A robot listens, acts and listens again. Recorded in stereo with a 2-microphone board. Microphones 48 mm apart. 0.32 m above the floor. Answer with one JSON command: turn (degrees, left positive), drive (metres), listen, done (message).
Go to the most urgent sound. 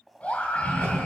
{"turn": 30}
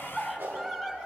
{"drive": 1.0}
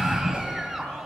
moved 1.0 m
{"drive": 1.0}
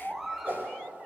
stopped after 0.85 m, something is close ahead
{"done": "Arrived at the scream, straight ahead."}